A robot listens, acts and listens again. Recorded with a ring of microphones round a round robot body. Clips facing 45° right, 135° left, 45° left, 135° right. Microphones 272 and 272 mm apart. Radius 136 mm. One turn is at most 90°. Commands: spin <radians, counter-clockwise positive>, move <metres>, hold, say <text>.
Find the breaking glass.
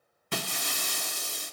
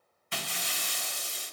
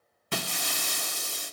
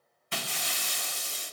say Found it: breaking glass, straight ahead.